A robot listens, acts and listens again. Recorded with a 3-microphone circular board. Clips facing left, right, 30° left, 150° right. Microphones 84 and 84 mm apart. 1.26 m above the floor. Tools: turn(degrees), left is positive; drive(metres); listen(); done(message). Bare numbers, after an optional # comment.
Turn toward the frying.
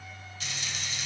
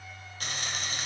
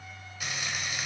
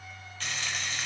# The frying: 50° right.
turn(-50)
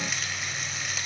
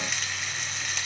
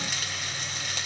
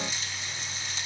done("Found it: frying, straight ahead.")